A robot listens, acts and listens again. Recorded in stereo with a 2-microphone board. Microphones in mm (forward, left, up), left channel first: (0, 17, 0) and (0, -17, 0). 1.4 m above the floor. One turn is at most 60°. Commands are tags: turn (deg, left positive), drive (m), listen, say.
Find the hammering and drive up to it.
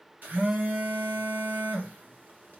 <listen/>
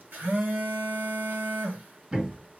<turn deg="-25"/>
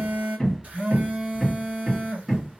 <drive m="1.0"/>
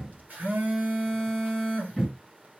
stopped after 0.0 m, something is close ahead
<turn deg="-10"/>
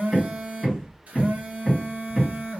<say>Something is in my way. I am facing the hammering but have not reached it.</say>